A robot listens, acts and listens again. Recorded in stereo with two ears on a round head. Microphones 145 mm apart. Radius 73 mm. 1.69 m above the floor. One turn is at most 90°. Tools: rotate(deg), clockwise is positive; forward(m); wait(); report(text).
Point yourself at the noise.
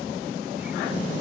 wait()
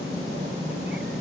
wait()
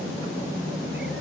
report("I can't make out anything to turn to.")